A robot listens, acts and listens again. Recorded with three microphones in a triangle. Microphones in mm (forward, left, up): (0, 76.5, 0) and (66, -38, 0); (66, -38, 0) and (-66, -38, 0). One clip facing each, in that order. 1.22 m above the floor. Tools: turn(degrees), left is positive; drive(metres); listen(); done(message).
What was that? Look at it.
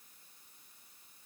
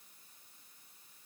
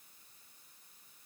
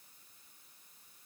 listen()
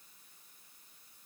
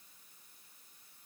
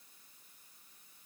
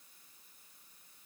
listen()
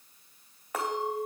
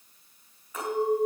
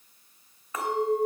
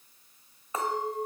turn(degrees=120)
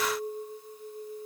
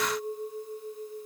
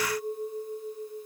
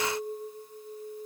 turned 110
turn(degrees=10)
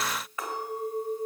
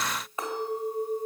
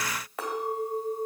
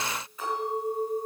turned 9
done("Facing the clink.")